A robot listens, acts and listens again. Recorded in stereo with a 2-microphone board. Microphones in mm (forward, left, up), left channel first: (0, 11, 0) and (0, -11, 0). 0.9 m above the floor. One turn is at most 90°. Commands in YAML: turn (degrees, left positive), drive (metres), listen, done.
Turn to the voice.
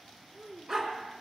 turn: -30
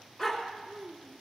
turn: -90
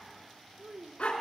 turn: -45
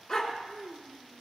done: "Facing the child speaking."